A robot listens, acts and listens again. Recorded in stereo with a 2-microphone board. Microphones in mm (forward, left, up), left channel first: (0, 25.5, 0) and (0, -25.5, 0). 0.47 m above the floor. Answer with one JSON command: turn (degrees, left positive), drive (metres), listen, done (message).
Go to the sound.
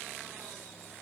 {"listen": true}
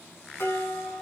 {"turn": 55}
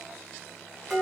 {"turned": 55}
{"drive": 1.0}
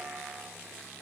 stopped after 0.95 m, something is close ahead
{"listen": true}
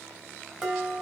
{"turn": -10}
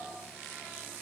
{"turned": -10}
{"listen": true}
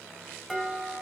{"done": "I am next to the dishes clattering."}